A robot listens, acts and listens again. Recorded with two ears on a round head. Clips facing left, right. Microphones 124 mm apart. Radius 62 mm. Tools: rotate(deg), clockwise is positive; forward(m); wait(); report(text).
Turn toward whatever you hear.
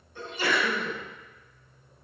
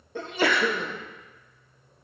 rotate(50)
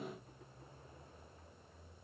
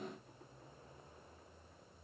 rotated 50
wait()
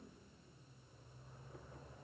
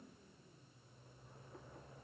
report("I heard a sneeze, but can't make it out now. It was about straight ahead or 80° right.")